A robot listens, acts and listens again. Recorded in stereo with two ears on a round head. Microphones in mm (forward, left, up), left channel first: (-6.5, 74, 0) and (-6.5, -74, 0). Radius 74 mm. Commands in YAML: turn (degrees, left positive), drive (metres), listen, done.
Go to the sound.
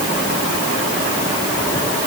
listen: true
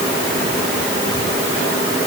listen: true
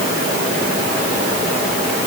done: "I can't make out anything."